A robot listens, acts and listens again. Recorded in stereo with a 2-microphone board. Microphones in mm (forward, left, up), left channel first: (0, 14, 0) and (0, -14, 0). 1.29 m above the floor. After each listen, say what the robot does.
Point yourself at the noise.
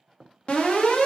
Turn 40° left.
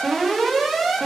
Facing the alarm.